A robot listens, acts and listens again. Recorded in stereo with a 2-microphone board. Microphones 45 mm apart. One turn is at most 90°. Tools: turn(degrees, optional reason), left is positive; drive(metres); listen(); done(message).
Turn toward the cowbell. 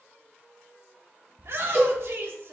turn(degrees=-20, reason="The cowbell: about 20° right or 160° right.")
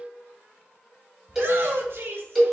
done("Facing the cowbell.")